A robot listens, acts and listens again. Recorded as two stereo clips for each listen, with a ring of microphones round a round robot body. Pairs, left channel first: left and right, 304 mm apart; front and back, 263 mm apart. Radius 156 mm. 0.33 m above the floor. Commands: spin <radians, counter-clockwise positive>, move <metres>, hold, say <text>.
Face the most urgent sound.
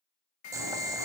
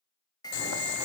spin 1.31
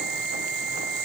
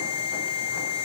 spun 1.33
say Found it: an alarm, straight ahead, 1 to 2 m away.